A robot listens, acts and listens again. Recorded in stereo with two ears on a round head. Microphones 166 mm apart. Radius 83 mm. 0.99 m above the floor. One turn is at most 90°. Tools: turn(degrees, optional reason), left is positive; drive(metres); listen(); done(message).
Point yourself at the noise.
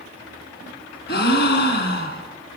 turn(degrees=60, reason="The gasp: about 60° left or 120° left.")
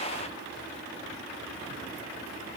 listen()
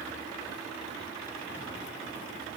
done("I heard a gasp, but can't make it out now. It was about straight ahead or 60° left.")